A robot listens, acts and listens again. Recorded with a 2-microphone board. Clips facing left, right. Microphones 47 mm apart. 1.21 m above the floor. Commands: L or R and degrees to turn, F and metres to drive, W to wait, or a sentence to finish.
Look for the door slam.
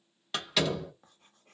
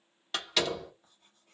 L30
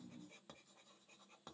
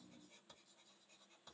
W
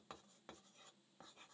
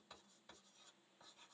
I heard a door slam, but can't make it out now. It was about 30° right or 150° left.